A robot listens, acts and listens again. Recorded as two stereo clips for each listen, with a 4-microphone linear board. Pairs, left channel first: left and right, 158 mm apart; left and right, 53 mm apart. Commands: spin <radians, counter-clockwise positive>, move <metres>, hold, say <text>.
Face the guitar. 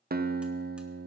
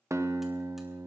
spin -1.31
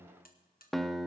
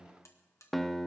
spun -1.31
say Facing the guitar.